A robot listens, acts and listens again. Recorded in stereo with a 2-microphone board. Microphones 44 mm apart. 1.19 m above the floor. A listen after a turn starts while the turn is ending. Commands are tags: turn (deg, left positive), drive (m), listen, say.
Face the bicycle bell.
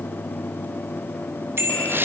<turn deg="-60"/>
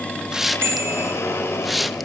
<turn deg="-65"/>
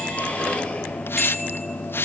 <listen/>
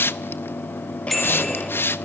<say>Facing the bicycle bell.</say>